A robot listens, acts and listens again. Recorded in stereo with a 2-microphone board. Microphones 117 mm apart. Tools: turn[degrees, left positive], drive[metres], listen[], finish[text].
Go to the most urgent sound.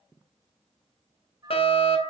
Thought: The fire alarm: about 55° left or 125° left.
Action: turn[55]
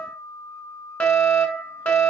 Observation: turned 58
Thought: So it is at 15° left.
Action: turn[15]
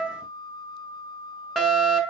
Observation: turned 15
Action: drive[1.0]
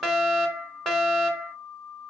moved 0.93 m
Action: drive[1.0]
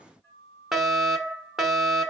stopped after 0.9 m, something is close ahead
Action: finish[I am next to the fire alarm.]